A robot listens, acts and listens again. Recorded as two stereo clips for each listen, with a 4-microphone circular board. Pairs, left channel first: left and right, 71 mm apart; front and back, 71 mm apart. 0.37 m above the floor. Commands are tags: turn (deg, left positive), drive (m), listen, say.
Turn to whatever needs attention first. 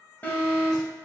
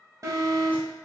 <turn deg="150"/>
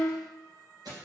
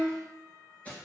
<listen/>
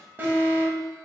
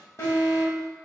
<turn deg="-30"/>
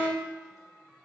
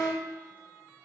<turn deg="-30"/>
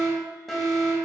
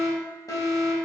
<say>Found it: an alarm, straight ahead.</say>